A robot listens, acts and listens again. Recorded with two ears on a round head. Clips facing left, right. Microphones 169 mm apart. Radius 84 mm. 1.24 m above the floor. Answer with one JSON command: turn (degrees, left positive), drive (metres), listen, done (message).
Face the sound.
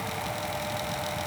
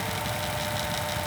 {"listen": true}
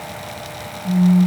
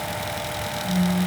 {"turn": 25}
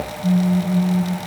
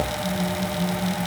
{"done": "Facing the phone buzzing, 2 to 4 m away."}